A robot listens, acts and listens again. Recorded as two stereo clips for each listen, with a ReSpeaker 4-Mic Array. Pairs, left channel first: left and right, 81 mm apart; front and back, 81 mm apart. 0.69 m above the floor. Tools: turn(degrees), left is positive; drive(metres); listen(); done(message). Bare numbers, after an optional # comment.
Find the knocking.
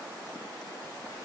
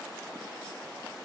listen()
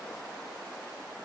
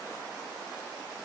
listen()
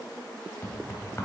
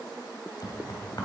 # The knocking: 35° left.
turn(35)
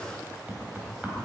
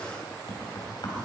# The knocking is now 20° right.
turn(-20)
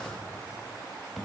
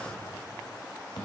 done("Facing the knocking.")